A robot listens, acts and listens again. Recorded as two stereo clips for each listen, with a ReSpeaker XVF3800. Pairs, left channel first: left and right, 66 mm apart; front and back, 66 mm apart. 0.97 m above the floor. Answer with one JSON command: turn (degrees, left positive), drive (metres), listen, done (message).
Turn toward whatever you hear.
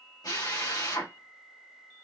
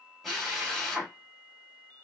{"turn": 90}
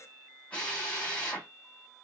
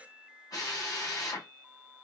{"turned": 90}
{"turn": 20}
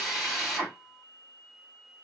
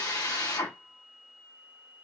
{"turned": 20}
{"done": "Found it: a drill, straight ahead."}